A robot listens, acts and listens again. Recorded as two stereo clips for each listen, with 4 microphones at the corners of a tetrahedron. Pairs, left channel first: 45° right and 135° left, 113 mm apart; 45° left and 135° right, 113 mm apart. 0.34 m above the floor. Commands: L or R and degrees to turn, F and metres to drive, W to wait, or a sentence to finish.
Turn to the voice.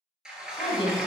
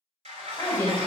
R20
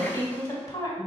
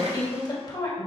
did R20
Facing the woman speaking.